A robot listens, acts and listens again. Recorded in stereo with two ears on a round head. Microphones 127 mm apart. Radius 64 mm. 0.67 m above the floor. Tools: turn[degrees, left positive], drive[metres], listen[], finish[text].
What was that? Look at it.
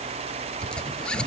Action: turn[30]
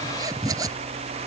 Thought: So it is at 25° right.
Action: turn[-25]
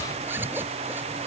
Thought: The zipper is now 15° right.
Action: turn[-15]
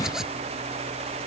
Action: finish[Facing the zipper.]